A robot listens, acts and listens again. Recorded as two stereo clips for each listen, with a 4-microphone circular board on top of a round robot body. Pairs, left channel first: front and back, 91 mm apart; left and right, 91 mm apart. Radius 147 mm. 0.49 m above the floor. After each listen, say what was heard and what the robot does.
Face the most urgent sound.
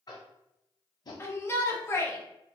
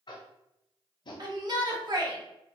The shout: 60° right. Turn 60° right.
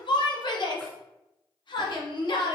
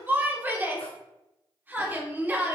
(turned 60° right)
The shout is now 25° right. Turn 25° right.
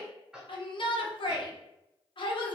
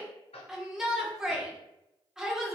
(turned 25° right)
The shout is now 10° right. Turn 10° right.
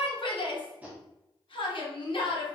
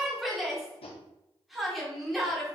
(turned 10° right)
Found it: a shout, straight ahead.